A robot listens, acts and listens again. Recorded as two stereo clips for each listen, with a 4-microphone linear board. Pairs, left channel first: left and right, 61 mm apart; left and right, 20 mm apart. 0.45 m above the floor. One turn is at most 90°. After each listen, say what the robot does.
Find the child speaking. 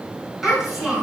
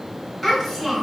Turn 30° right.
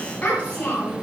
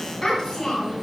Turn 30° left.
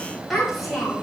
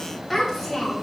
Facing the child speaking, 1 to 2 m away.